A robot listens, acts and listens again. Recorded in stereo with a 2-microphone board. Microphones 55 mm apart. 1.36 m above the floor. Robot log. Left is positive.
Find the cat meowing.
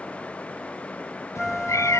note: The cat meowing: about 75° left or 105° left.
cmd yaw +75
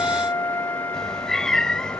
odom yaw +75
note: So it is at 10° left.
cmd yaw +10
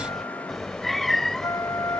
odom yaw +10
end: Facing the cat meowing.